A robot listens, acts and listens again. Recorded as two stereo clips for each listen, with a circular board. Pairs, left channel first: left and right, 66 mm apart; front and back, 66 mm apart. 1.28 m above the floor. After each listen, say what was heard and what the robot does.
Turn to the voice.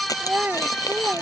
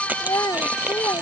The child speaking: 25° right. Turn 25° right.
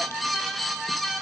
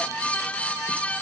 Keep listening.
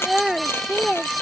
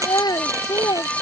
Facing the child speaking.